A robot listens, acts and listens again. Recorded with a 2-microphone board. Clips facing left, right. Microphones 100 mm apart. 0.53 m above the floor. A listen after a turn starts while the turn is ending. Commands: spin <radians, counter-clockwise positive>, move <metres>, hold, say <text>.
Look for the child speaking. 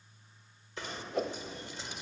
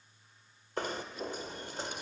hold
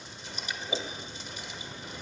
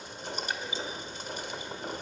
hold
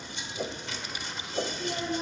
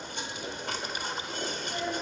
spin 0.61
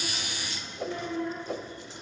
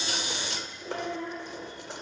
say Facing the child speaking, over 4 m away.